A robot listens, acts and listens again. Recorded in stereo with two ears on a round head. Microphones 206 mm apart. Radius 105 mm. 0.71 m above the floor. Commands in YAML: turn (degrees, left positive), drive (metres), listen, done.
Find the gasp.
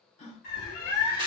turn: 30
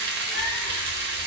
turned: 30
listen: true
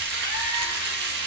done: "I heard a gasp, but can't make it out now. It was about straight ahead or 120° left."